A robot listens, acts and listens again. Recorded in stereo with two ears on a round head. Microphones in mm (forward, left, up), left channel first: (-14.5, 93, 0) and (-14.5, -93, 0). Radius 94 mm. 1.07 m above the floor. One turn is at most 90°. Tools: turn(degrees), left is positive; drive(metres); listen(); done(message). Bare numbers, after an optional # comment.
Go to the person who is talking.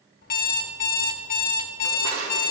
listen()
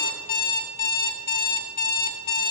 listen()
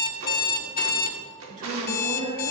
# The woman speaking: about 35° right or 145° right.
turn(-35)
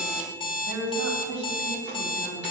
# So it is at 110° right.
turn(-90)
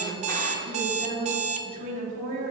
# The woman speaking is now 35° right.
turn(-35)
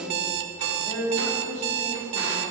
drive(1.0)
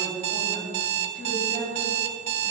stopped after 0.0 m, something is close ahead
done("Blocked. The woman speaking is further on, straight ahead.")